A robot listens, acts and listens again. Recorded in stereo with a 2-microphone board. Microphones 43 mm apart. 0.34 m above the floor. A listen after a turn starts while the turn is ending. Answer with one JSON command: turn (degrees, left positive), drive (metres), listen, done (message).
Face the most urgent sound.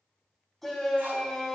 {"turn": 30}
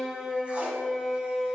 {"turn": -25}
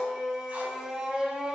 {"turn": -20}
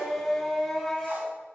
{"done": "Found it: a shout, straight ahead."}